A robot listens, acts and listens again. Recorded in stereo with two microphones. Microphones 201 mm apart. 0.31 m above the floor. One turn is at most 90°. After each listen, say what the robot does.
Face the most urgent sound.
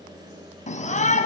Turn 35° left.
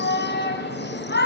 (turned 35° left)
Turn 90° left.
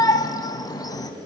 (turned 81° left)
Turn 20° left.
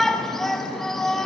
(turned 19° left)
Facing the shout.